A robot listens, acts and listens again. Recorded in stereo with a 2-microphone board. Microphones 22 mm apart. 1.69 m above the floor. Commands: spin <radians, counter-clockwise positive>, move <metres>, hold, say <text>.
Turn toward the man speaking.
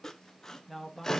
spin 0.52
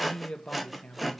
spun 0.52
spin 1.92
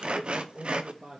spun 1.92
spin -0.79
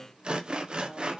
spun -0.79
hold
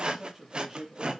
say Found it: a man speaking, straight ahead, 2 to 4 m away.